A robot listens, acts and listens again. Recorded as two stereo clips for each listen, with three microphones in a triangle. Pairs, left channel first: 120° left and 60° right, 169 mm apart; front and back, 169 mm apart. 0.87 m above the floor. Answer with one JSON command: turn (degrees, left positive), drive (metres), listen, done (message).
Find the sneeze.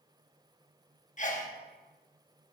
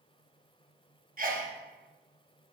{"turn": 155}
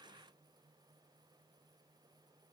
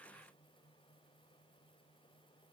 {"done": "Facing where the sneeze came from. I can't hear it now."}